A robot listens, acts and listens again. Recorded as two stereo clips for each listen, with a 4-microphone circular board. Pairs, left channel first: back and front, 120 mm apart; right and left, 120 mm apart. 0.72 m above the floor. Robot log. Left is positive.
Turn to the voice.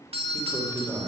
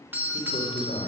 note: The man speaking: 70° right.
cmd yaw -70
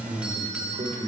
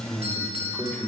end: Found it: a man speaking, straight ahead.